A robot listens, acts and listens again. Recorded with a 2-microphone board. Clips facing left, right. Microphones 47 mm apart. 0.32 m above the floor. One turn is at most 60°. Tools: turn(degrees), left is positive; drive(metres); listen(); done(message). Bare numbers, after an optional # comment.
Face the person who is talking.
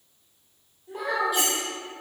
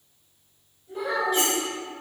# The child speaking: about 65° left or 115° left.
turn(60)
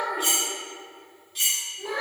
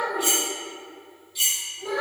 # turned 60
# So it is at 35° left.
turn(35)
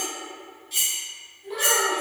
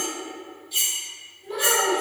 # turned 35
done("Found it: a child speaking, straight ahead.")